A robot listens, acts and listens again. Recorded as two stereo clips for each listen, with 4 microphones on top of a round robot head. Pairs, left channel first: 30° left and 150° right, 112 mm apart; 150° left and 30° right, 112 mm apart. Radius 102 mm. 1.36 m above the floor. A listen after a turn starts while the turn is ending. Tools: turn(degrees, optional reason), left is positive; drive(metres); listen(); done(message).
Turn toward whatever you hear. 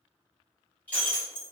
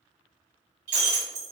turn(degrees=-45, reason="The breaking glass: 45° right.")
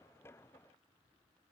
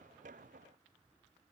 done("I heard breaking glass from this way, but can't make it out now.")